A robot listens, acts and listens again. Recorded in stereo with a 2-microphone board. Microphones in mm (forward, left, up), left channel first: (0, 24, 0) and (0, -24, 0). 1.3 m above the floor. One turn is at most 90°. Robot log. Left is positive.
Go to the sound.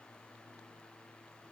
cmd idle
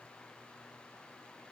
cmd idle
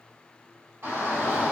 note: The shout: about 70° right or 110° right.
cmd yaw -70
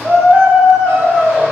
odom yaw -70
note: So it is at 40° right.
cmd yaw -40
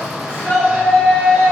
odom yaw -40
note: The shout is now 25° right.
cmd yaw -25
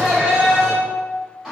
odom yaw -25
note: The shout is now 15° right.
cmd yaw -15
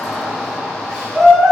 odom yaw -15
cmd fwd 1.0
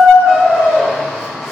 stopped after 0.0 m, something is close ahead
end: Something is in my way. I am facing the shout but have not reached it.